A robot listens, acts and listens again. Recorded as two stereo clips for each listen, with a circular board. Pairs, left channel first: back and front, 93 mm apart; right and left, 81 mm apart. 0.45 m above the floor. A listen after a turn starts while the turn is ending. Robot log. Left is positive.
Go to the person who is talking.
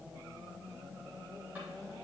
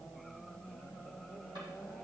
cmd idle
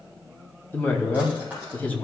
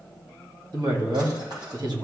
note: The woman speaking: 110° left.
cmd yaw +110
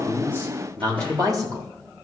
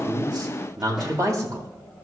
note: The woman speaking is now 45° left.
cmd yaw +45
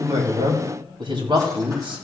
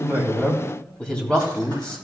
note: The woman speaking is now 15° right.
cmd yaw -15
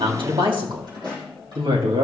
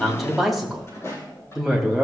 cmd fwd 1.0
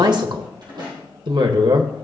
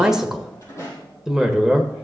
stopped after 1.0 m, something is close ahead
end: Arrived at the woman speaking, straight ahead.